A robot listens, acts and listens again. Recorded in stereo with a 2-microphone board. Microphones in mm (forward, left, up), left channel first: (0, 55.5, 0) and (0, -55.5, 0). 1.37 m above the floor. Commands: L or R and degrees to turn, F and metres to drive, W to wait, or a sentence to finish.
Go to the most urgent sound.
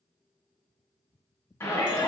L25
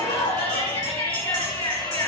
L130
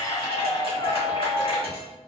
L50
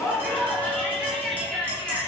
F1.0
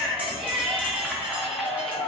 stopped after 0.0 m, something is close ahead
Blocked. The shout is further on, straight ahead.